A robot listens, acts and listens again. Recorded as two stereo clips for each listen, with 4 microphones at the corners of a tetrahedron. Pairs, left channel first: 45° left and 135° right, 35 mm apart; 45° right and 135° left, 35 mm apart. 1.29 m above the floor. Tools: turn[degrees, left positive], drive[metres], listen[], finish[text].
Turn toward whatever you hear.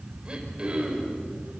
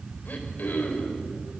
Thought: The throat clearing: 75° right.
Action: turn[-75]
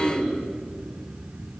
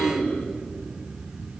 Thought: The throat clearing is now 15° right.
Action: turn[-15]
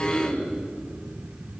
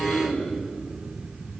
Action: finish[Facing the throat clearing.]